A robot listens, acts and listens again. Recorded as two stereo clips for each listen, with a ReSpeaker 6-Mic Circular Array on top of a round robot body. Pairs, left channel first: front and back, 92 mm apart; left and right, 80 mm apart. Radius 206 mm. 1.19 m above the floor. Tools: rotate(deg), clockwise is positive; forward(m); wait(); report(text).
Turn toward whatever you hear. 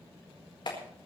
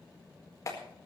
rotate(-40)
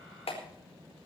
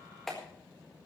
report("Facing the clap.")